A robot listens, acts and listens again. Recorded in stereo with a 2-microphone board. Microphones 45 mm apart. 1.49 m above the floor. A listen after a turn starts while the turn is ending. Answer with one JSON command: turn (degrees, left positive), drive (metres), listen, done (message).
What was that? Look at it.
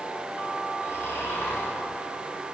{"turn": 70}
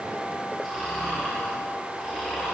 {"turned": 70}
{"done": "Found it: snoring, straight ahead."}